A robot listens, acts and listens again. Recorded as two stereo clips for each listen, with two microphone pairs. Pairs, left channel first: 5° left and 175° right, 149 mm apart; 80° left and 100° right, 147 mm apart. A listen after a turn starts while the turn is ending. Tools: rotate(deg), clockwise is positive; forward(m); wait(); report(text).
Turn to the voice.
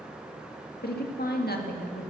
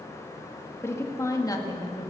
rotate(-15)
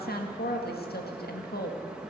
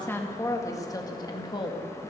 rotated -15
rotate(-20)
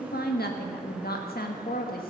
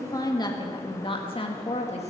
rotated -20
rotate(-30)
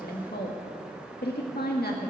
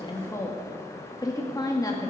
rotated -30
rotate(-10)
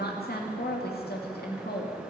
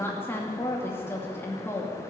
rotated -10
report("Found it: a woman speaking, straight ahead, 2 to 4 m away.")